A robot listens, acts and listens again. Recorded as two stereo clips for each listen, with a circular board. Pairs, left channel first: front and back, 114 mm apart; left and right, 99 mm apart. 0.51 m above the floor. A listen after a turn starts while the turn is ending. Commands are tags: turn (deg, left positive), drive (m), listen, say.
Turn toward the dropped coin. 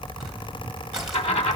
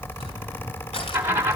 <turn deg="-25"/>
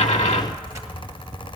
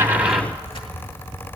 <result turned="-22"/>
<say>Facing where the dropped coin came from. I can't hear it now.</say>